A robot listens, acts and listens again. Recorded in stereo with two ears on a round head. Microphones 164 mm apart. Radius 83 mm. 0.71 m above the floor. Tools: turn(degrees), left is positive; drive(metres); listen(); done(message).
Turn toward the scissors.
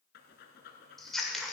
turn(degrees=30)
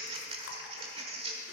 turn(degrees=-30)
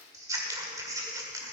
turn(degrees=-20)
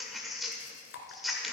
done("Facing the scissors, 1 to 2 m away.")